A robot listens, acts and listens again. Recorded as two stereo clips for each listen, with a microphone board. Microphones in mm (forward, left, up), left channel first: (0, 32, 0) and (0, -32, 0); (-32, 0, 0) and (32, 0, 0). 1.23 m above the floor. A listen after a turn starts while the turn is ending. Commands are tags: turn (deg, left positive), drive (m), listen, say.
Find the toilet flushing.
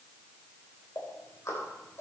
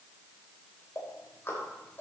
<listen/>
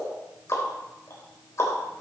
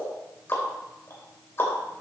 <listen/>
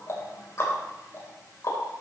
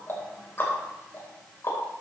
<say>I can't make out a toilet flushing, only ticking.</say>